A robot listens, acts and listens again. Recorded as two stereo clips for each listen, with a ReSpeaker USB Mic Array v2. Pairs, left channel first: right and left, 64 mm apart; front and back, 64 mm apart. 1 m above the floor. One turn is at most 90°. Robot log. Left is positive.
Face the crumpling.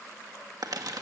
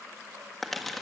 note: The crumpling: 85° left.
cmd yaw +85
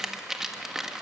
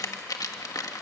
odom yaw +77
note: The crumpling is now 10° left.
cmd yaw +10
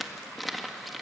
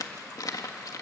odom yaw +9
end: Facing the crumpling.